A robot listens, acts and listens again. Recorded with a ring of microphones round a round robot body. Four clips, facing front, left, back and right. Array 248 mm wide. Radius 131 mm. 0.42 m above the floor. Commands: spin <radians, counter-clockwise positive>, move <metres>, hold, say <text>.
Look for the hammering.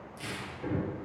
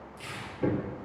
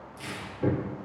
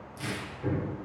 spin 2.18
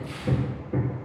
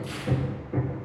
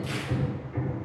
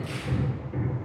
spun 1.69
spin 0.52
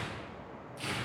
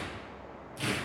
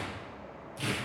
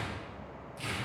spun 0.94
spin -0.44
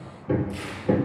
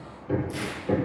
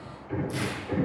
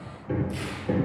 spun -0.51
say Facing the hammering, over 4 m away.